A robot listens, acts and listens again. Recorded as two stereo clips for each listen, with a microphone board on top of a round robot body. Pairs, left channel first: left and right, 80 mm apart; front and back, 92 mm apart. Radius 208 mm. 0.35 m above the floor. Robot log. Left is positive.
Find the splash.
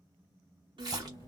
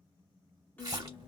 note: The splash: 130° right.
cmd yaw -130
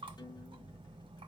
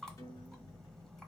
end: I heard a splash from this way, but can't make it out now.